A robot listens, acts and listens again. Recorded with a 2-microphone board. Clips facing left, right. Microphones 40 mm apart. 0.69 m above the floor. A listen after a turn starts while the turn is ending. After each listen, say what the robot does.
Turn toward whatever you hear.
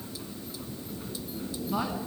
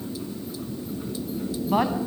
Turn 60° right.
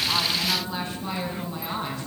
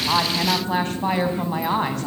Turn 70° right.
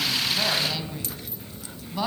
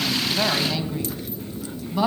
Turn 10° right.
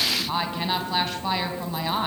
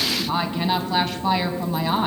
Found it: a woman speaking, straight ahead.